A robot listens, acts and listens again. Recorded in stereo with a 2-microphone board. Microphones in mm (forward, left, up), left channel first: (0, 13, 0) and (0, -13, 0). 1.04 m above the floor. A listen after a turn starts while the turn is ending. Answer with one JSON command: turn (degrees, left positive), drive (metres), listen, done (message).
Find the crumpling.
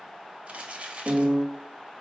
{"turn": -60}
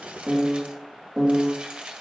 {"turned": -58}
{"turn": -45}
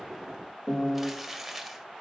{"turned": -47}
{"done": "Facing the crumpling, 1 to 2 m away."}